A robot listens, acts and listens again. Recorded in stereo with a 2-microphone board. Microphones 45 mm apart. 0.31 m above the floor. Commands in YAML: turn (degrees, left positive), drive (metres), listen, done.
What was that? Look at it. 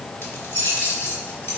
turn: 65
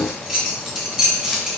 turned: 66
done: "Found it: keys jangling, straight ahead."